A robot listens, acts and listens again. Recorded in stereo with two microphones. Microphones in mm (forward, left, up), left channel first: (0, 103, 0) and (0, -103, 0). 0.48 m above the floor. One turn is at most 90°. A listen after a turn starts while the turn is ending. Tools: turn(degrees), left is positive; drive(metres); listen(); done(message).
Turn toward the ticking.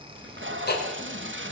turn(degrees=50)
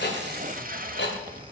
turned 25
turn(degrees=90)
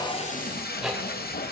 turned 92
done("Found it: ticking, straight ahead, 2 to 4 m away.")